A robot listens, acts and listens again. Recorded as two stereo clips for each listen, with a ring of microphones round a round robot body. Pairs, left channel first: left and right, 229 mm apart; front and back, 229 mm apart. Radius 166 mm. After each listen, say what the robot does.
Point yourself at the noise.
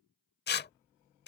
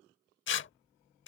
Turn 40° left.
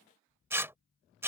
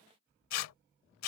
Turn 10° right.
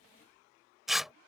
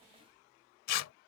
Facing the tearing paper.